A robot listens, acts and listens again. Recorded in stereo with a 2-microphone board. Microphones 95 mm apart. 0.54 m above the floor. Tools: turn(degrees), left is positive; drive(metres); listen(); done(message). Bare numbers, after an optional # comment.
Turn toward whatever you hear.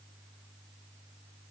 listen()
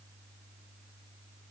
listen()
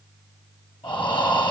# The breathing: about 70° left or 110° left.
turn(70)
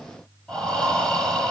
# So it is at 10° left.
turn(10)
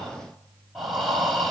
done("Found it: breathing, straight ahead, over 4 m away.")